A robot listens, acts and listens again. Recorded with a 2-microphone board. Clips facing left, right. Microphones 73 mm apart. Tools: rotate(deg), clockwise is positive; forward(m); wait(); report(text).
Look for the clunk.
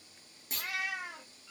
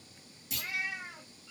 rotate(-40)
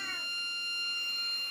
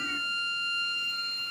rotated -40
wait()
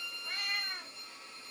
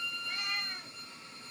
report("I heard a clunk, but can't make it out now. It was about straight ahead or 100° left.")